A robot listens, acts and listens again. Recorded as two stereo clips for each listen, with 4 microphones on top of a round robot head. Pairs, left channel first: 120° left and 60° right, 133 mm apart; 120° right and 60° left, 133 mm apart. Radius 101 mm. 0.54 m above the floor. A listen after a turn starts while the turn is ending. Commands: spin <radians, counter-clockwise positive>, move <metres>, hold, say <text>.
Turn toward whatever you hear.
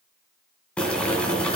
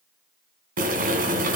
spin 0.70
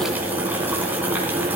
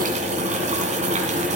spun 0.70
spin 0.35
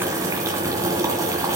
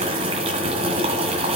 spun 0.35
spin 0.17
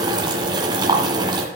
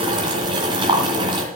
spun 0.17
say Found it: boiling, straight ahead, 2 to 4 m away.